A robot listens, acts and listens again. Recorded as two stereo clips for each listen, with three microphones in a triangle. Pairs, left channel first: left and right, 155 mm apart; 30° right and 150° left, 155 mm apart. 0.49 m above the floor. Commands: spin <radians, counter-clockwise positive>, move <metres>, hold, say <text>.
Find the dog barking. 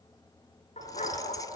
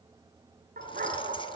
spin 2.18
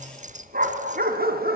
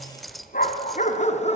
spin -1.40
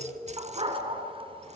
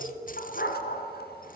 spin -0.61
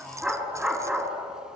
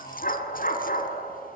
say Found it: a dog barking, straight ahead, 2 to 4 m away.